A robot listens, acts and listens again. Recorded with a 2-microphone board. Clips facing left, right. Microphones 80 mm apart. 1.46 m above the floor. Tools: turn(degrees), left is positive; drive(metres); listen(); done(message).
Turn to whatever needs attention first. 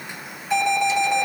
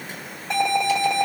turn(degrees=-90)
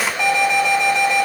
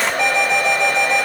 done("Facing the alarm.")